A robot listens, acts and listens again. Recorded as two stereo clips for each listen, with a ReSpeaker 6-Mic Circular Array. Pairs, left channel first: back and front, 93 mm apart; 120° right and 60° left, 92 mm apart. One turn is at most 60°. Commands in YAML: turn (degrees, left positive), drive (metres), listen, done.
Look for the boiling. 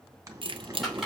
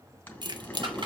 turn: -55
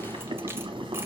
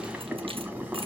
turn: -15
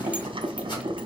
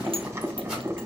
done: "Facing the boiling, 1 to 2 m away."